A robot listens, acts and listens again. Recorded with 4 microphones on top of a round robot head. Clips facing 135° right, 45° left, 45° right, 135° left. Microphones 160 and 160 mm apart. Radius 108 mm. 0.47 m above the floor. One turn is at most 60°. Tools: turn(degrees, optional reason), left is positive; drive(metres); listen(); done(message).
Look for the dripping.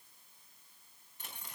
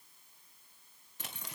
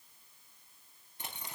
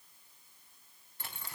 listen()
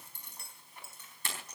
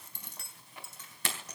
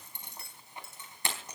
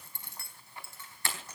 listen()
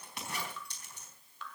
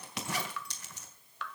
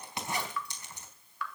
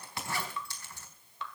turn(degrees=60, reason="The dripping: 70° left.")
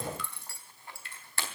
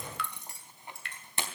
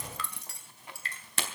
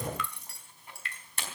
turn(degrees=15, reason="The dripping is now 15° left.")
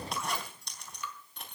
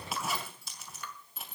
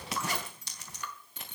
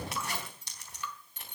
done("Found it: dripping, straight ahead.")